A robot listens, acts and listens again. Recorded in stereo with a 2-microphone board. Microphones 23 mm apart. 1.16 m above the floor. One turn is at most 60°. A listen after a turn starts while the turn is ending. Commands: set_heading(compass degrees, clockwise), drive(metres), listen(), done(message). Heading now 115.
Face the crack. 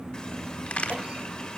set_heading(55)
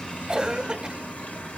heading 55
set_heading(25)
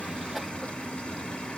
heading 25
done("Facing where the crack came from. I can't hear it now.")